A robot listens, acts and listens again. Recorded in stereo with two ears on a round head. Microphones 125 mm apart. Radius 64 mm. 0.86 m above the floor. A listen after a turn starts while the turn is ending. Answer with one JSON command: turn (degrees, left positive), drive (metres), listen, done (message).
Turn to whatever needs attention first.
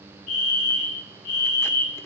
{"turn": 65}
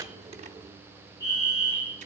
{"turn": 30}
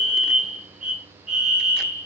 {"done": "Facing the fire alarm, over 4 m away."}